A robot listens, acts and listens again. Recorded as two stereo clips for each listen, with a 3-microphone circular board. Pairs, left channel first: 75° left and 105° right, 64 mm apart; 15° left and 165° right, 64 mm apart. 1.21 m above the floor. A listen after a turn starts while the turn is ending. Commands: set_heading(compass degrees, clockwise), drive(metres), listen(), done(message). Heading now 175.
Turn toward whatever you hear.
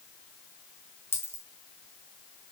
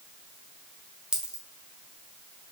set_heading(55)
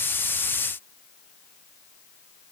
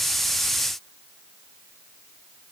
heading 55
done("Facing where the dropped coin came from. I can't hear it now.")